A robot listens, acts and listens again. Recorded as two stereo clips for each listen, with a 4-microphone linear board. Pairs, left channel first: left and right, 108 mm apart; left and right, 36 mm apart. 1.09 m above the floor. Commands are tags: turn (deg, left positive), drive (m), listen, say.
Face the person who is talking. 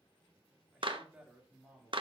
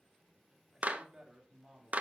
<turn deg="-30"/>
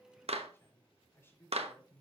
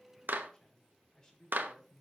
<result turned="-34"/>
<turn deg="20"/>
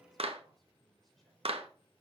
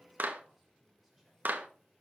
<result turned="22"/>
<listen/>
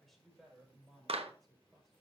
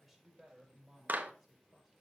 <say>Facing the man speaking, over 4 m away.</say>